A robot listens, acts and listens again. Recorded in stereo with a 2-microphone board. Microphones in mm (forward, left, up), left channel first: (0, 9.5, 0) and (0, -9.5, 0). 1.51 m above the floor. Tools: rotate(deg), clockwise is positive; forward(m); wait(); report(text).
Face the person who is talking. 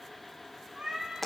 wait()
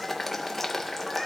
wait()
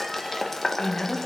rotate(-60)
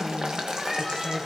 rotate(-55)
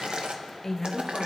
rotate(-25)
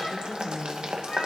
report("Facing the woman speaking, 1 to 2 m away.")